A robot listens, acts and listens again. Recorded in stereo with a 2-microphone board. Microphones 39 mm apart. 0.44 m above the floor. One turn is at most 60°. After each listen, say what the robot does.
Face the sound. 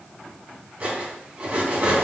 Turn 40° right.
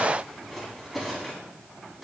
Facing the cutlery clinking.